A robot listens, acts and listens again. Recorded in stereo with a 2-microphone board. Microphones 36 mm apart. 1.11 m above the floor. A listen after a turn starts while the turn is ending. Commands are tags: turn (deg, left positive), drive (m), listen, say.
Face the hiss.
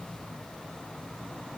<listen/>
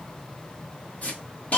<turn deg="40"/>
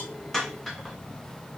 <say>Facing the hiss.</say>